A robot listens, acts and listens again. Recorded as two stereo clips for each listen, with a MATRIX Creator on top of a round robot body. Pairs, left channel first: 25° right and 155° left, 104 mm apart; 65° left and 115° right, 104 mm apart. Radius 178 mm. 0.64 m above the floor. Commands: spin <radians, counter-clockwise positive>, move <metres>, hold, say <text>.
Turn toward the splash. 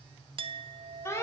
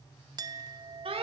hold
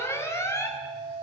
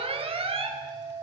hold
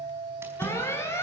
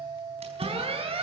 spin -2.36
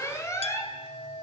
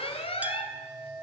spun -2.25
say Facing where the splash came from. I can't hear it now.